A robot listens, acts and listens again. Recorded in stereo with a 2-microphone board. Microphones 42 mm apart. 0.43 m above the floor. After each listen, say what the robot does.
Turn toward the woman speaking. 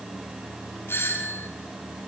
Keep listening.
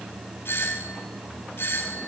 Keep listening.
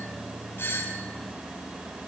I can't make out a woman speaking to turn to.